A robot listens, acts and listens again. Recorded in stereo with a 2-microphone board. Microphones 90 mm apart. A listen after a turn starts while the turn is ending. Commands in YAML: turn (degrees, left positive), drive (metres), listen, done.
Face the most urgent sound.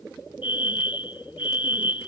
turn: 75
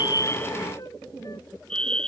turn: 10
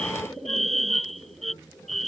done: "Facing the fire alarm."